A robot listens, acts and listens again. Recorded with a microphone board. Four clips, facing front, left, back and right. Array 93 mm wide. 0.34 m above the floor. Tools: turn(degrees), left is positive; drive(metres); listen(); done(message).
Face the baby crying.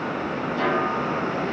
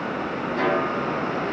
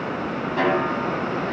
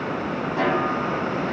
listen()
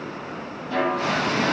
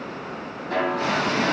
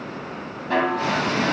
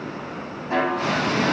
listen()
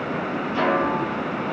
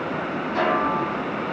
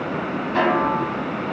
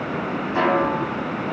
done("I can't make out a baby crying, only a snare drum.")